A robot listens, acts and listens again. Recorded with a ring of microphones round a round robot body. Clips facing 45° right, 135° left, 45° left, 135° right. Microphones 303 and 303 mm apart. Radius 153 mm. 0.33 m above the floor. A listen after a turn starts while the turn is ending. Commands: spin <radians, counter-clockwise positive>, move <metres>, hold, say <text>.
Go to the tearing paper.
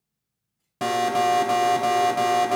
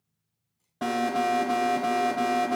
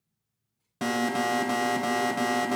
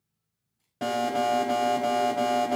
hold
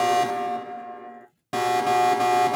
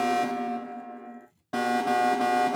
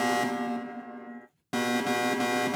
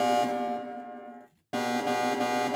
spin -2.62
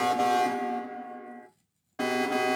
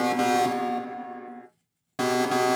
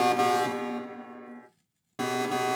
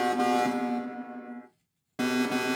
move 1.0
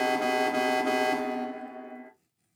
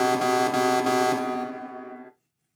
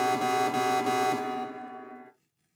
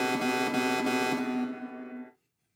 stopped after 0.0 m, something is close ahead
say Blocked. The tearing paper is further on, straight ahead.